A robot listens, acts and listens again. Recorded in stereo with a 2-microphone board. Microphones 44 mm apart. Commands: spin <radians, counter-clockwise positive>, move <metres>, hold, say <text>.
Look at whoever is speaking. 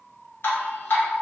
hold
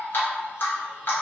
hold
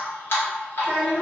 spin 0.35
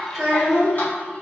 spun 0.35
say Facing the child speaking, 1 to 2 m away.